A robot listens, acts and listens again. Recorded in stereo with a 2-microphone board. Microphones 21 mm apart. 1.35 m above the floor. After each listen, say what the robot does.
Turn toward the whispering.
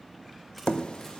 Keep listening.
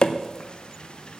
Keep listening.
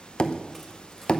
I can't make out whispering to turn to.